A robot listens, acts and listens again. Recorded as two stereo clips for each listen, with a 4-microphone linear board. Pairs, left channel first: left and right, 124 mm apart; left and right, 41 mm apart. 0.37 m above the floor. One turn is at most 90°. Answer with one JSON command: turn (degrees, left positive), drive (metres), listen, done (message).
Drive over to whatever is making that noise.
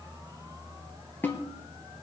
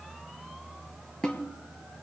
{"turn": 30}
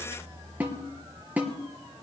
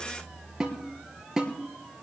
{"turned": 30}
{"turn": -15}
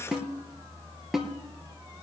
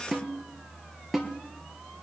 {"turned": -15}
{"drive": 1.0}
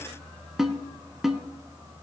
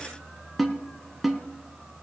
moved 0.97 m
{"drive": 1.0}
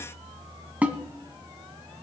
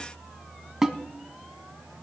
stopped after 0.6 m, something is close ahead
{"turn": -15}
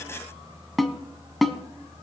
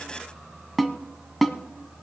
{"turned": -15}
{"done": "I am next to the snare drum."}